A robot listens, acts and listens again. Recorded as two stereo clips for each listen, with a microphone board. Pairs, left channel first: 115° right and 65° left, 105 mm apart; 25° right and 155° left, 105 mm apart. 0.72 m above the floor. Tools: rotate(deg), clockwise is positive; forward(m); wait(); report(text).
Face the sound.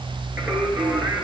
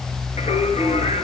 rotate(10)
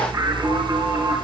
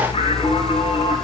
report("Facing the singing.")